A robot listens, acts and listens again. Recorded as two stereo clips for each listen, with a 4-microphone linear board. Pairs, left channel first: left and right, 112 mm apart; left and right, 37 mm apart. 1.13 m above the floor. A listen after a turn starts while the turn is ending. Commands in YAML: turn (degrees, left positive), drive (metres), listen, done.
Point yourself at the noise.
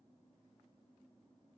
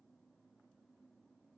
listen: true
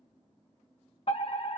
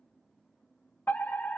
turn: 60
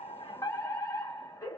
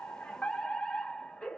turn: 35
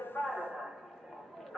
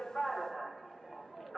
done: "Facing the fire alarm."